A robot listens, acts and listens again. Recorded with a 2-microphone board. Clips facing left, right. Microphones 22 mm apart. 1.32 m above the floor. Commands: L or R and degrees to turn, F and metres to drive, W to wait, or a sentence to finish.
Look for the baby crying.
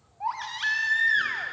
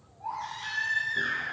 L70
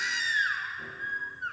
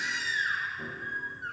L25
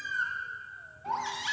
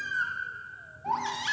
Found it: a baby crying, straight ahead, 1 to 2 m away.